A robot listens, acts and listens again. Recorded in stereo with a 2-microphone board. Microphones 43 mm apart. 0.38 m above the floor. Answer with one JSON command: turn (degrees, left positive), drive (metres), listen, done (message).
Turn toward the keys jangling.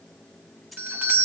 {"turn": 30}
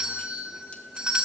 {"listen": true}
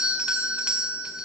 {"listen": true}
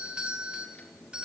{"done": "I heard keys jangling, but can't make it out now. It was about 30° right or 150° left."}